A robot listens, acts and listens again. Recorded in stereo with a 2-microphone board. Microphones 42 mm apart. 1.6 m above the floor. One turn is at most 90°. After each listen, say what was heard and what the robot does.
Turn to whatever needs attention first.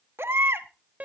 The baby crying: about 70° right or 110° right. Turn 70° right.
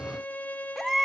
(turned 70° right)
So it is at 10° right. Turn 10° right.
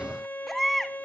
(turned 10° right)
Found it: a baby crying, straight ahead, 1 to 2 m away.